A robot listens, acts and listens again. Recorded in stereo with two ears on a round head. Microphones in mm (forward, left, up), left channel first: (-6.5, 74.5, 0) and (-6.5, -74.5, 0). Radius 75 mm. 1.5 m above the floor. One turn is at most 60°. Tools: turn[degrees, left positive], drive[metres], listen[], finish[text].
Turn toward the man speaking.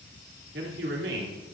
Action: turn[-60]
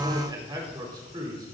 Thought: So it is at 25° right.
Action: turn[-25]
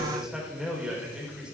Action: finish[Found it: a man speaking, straight ahead.]